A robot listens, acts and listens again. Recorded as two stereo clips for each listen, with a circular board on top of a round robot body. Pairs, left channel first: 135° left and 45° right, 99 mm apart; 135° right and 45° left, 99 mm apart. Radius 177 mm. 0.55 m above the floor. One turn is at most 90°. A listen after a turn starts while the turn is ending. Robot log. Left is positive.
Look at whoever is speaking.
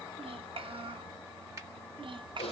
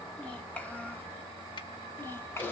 note: The child speaking: 70° right.
cmd yaw -70
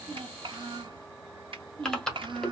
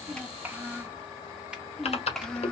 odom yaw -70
note: The child speaking is now 55° right.
cmd yaw -55
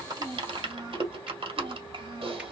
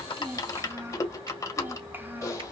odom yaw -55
note: The child speaking is now 25° right.
cmd yaw -25
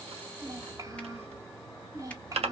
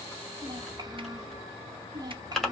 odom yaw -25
end: Found it: a child speaking, straight ahead.